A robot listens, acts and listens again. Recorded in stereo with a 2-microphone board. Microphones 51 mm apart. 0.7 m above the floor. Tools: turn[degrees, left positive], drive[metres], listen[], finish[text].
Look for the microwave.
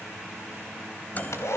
Thought: The microwave: about 35° left or 145° left.
Action: turn[35]
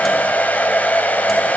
Action: listen[]
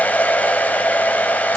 Action: listen[]
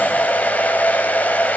Action: finish[I heard a microwave, but can't make it out now. It was about straight ahead or 110° left.]